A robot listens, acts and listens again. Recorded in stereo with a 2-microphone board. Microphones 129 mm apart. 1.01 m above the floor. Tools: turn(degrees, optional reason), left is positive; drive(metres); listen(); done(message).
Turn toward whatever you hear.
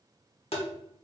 turn(degrees=55, reason="The tapping: about 55° left or 125° left.")
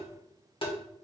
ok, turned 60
turn(degrees=55, reason="So it is at 55° left.")
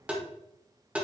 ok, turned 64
turn(degrees=-10, reason="The tapping is now 10° right.")
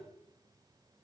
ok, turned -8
listen()
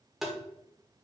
done("Facing the tapping.")